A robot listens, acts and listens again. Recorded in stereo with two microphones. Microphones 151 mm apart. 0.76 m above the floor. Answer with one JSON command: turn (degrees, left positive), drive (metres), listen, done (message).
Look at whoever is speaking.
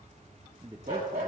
{"turn": -25}
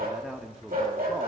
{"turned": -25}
{"done": "Facing the man speaking."}